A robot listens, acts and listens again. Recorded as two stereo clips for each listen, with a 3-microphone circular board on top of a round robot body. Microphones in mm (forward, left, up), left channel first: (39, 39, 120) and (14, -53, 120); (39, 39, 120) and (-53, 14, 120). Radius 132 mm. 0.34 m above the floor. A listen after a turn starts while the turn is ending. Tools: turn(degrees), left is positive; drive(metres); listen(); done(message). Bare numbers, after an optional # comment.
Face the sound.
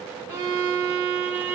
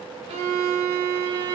# The violin: 170° right.
turn(-170)
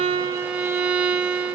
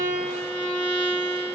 # The violin is now 20° right.
turn(-20)
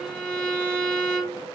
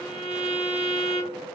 done("Found it: a violin, straight ahead, under 1 m away.")